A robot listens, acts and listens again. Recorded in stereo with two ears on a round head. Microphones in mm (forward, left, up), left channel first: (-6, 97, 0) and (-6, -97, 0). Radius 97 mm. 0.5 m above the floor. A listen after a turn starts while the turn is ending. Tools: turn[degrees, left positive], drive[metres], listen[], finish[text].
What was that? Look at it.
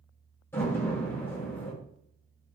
Action: turn[30]
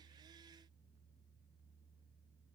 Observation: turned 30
Action: listen[]
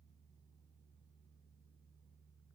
Action: finish[I heard a door slam, but can't make it out now. It was about 20° right or 140° left.]